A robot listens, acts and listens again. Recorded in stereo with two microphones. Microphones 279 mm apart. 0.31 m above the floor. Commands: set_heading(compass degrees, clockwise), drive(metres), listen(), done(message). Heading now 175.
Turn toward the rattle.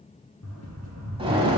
set_heading(85)
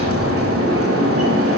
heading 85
listen()
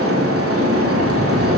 listen()
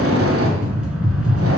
done("Facing the rattle.")